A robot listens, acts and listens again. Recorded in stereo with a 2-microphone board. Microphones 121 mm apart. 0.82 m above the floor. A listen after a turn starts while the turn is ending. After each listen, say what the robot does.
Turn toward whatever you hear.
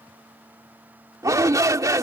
Turn 30° right.
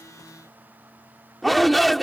Facing the shout.